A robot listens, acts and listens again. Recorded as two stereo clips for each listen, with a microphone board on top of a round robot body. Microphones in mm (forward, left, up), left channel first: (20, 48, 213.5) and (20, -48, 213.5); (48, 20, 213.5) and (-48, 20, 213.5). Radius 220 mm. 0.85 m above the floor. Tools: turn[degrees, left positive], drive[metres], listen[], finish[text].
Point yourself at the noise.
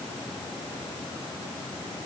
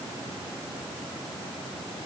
Action: listen[]
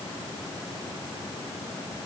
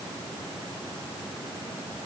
Action: listen[]
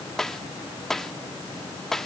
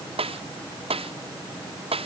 Thought: The snare drum: 175° left.
Action: turn[175]
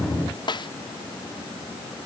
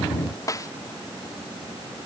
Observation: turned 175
Thought: The snare drum is now 55° left.
Action: turn[55]
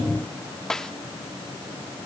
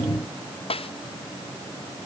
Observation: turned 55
Action: finish[Found it: a snare drum, straight ahead.]